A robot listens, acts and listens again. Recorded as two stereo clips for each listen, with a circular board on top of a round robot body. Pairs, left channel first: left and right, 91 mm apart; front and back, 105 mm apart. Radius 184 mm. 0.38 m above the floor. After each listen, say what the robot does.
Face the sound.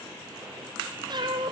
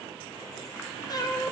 Turn 55° right.
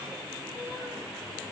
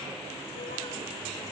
Keep listening.
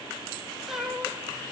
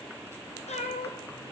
Found it: a cat meowing, straight ahead.